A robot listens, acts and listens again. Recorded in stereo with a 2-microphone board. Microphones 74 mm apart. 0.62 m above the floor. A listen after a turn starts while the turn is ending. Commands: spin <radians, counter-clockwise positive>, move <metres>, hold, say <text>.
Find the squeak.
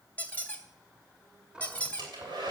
spin 0.35
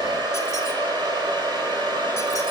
hold
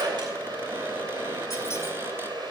hold
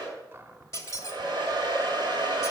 spin 2.44
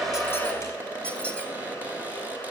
spin 0.26
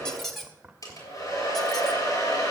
say Facing the squeak, 1 to 2 m away.